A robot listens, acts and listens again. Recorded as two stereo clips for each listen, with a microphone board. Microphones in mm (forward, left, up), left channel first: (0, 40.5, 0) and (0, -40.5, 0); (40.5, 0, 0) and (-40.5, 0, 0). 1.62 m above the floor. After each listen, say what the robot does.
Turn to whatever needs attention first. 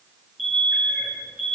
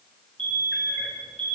Turn 180° left.
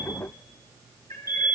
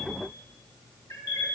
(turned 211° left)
Turn 30° right.
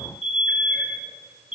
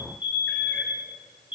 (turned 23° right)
Turn 10° right.
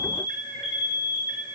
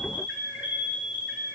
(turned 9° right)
Facing the alarm, over 4 m away.